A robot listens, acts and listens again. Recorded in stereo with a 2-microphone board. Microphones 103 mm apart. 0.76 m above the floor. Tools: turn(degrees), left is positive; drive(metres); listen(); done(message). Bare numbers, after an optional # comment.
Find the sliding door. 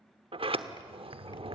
# The sliding door: about 65° right or 115° right.
turn(-65)
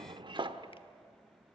# So it is at 50° right.
turn(-50)
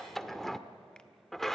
done("Facing the sliding door, 1 to 2 m away.")